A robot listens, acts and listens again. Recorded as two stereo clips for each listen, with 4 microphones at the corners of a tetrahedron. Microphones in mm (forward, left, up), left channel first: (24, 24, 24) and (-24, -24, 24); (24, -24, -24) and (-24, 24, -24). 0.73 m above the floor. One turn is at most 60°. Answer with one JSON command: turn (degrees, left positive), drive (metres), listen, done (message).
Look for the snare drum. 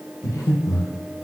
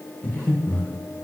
{"listen": true}
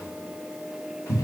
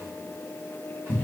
{"listen": true}
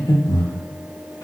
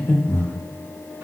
{"done": "I can't make out a snare drum to turn to."}